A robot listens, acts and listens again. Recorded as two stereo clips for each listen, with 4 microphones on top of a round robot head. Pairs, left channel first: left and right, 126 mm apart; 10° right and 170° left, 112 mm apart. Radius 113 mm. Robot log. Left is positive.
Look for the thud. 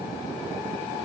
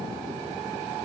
cmd idle
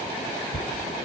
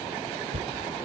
note: The thud: 135° left.
cmd yaw +135
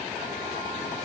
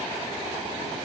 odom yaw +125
note: Nothing new. It was at 10° left.
cmd yaw +10
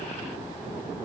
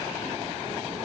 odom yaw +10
end: Facing where the thud came from. I can't hear it now.